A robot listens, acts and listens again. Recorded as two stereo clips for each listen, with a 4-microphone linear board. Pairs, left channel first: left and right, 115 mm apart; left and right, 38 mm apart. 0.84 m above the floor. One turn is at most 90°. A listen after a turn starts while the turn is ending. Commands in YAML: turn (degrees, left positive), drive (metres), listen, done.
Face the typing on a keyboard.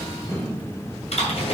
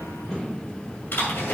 turn: 65
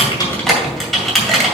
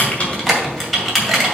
done: "Found it: typing on a keyboard, straight ahead."